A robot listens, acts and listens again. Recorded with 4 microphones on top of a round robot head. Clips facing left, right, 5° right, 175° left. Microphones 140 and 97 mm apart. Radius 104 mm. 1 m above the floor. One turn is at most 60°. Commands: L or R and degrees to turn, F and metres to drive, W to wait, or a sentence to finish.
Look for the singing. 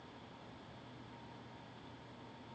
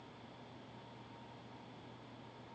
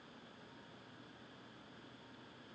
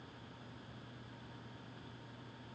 W
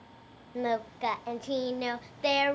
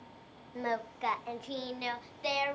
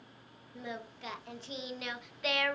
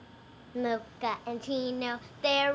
L60
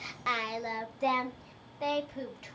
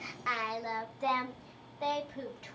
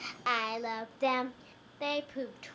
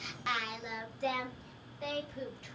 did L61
Found it: singing, straight ahead.